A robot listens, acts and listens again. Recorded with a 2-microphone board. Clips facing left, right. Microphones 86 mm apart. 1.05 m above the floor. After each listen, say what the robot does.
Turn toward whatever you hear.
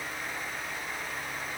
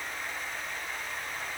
Keep listening.
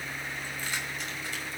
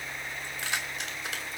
Turn 90° right.
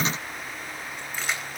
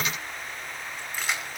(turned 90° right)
Found it: keys jangling, straight ahead, over 4 m away.